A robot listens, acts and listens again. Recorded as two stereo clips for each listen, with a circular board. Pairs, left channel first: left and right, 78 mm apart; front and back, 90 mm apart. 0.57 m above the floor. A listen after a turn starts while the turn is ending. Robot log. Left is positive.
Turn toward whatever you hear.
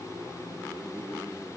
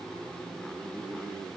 cmd idle
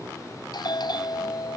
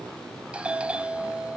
note: The doorbell: 105° left.
cmd yaw +105
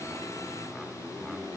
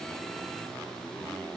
cmd idle
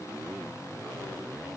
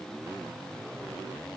cmd idle
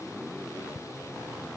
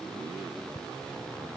note: The doorbell is now 25° right.
cmd yaw -25
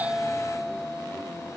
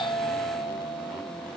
end: Found it: a doorbell, straight ahead.